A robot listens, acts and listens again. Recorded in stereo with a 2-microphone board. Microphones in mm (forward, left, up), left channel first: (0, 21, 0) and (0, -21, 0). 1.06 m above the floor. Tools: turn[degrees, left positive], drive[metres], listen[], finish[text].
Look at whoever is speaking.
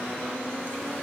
Action: listen[]
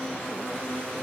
Action: listen[]
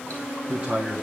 Thought: The man speaking: about 20° right or 160° right.
Action: turn[-20]
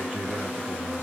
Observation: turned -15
Action: finish[Found it: a man speaking, straight ahead.]